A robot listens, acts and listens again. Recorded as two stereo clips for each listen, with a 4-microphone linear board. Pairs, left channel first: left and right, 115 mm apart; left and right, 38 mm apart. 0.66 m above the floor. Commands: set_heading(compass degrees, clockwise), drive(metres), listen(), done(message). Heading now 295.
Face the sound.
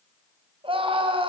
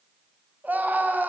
set_heading(345)
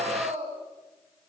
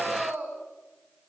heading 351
set_heading(66)
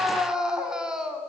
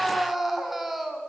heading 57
done("Facing the scream.")